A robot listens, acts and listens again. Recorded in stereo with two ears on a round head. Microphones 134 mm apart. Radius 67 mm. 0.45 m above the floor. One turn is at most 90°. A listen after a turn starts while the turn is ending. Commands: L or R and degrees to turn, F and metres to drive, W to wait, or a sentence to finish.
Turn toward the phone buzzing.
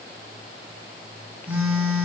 R30
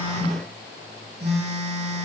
R90
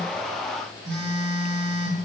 R80
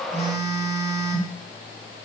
R25
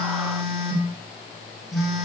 Found it: a phone buzzing, straight ahead.